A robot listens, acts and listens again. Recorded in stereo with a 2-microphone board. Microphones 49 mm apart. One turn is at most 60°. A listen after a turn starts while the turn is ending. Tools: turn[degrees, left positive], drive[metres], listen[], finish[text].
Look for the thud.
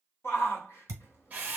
Action: turn[-60]
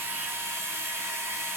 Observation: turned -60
Thought: Nothing new. It was at 30° right.
Action: turn[-30]
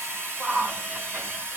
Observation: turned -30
Action: finish[I heard a thud from this way, but can't make it out now.]